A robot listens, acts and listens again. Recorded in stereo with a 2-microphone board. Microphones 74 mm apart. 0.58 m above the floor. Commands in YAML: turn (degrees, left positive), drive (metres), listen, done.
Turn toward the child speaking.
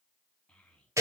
turn: 30
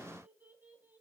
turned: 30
turn: -25
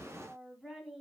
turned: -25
done: "Facing the child speaking."